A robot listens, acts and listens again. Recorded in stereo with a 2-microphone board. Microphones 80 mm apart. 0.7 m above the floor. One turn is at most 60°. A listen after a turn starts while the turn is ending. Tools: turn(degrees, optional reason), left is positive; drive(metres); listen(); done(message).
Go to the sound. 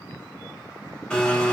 turn(degrees=30)
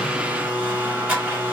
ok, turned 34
turn(degrees=-25, reason="So it is at 25° right.")
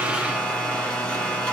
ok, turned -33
turn(degrees=10, reason="The blender is now 10° left.")
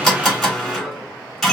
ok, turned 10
drive(metres=1.0)
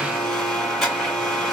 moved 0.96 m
drive(metres=1.0)
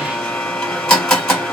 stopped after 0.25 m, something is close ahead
turn(degrees=15, reason="The blender is now 15° left.")
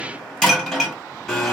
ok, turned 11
done("I am next to the blender.")